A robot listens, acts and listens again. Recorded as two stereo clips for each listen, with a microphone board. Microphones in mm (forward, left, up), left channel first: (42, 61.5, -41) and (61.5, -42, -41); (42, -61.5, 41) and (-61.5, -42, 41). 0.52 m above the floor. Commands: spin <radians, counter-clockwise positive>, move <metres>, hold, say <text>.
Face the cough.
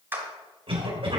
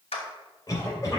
spin -1.13
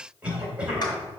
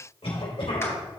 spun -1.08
say Found it: a cough, straight ahead.